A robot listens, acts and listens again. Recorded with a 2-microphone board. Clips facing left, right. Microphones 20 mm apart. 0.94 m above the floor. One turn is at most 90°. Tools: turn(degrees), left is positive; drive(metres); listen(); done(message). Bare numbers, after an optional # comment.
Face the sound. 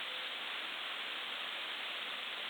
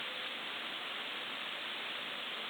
listen()
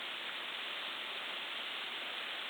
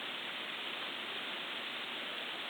listen()
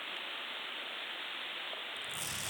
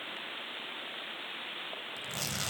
# The tearing paper: about 50° right or 130° right.
turn(-50)
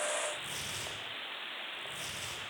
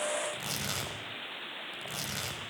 # So it is at 75° right.
turn(-75)
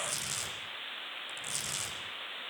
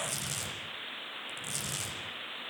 done("Found it: tearing paper, straight ahead, over 4 m away.")